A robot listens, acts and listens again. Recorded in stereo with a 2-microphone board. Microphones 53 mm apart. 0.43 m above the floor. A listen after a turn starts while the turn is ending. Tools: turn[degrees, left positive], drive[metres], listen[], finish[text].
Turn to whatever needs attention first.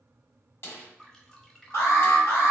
Thought: The alarm: about 60° left or 120° left.
Action: turn[60]
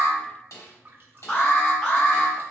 Thought: So it is at 25° left.
Action: turn[25]
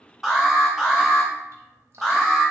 Action: finish[Facing the alarm.]